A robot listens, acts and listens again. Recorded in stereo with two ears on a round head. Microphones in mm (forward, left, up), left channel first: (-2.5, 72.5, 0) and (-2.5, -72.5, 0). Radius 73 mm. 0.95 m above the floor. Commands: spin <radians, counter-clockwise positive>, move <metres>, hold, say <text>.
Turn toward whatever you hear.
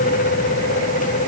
hold
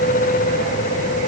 hold
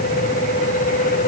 say I can't make out anything to turn to.